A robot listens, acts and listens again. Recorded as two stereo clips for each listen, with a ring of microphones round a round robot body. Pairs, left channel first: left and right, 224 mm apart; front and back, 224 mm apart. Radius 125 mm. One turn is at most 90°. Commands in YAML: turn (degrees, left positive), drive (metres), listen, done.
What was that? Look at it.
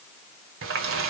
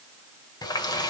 turn: -70
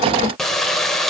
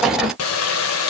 done: "Facing the running tap."